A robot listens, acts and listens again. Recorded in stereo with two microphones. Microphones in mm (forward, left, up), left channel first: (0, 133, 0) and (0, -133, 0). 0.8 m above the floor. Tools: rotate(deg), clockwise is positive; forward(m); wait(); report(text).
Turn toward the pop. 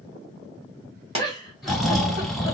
rotate(25)
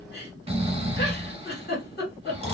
wait()
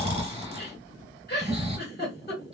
report("I heard a pop, but can't make it out now. It was about straight ahead or 130° right.")